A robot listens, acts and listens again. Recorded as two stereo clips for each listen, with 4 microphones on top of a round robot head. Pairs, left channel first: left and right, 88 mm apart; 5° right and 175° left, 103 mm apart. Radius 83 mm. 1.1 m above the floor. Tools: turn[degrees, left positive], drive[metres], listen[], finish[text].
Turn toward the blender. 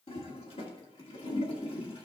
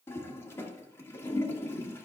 Action: listen[]
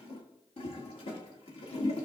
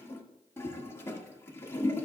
Action: listen[]
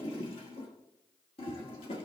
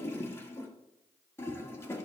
Action: finish[I can't make out a blender to turn to.]